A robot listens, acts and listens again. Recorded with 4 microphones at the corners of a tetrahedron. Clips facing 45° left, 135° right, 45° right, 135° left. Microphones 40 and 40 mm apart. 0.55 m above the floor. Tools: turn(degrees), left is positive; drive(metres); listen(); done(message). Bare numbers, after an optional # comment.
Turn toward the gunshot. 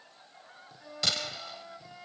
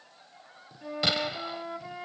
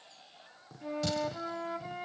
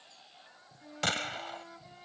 # The gunshot: 160° left.
turn(160)
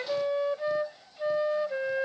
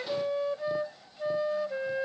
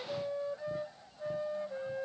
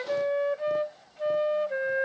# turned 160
done("I heard a gunshot from this way, but can't make it out now.")